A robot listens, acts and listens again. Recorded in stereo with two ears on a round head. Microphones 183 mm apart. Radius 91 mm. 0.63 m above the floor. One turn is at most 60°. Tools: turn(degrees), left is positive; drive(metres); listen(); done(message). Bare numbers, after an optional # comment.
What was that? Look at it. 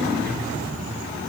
listen()
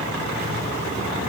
listen()
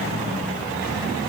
done("I can't make out anything.")